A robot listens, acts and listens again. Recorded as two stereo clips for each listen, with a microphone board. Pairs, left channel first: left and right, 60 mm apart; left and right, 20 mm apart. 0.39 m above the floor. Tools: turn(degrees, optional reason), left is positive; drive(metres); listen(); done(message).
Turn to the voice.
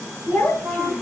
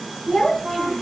turn(degrees=45, reason="The child speaking: about 45° left or 135° left.")
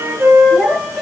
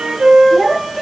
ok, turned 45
done("Found it: a child speaking, straight ahead.")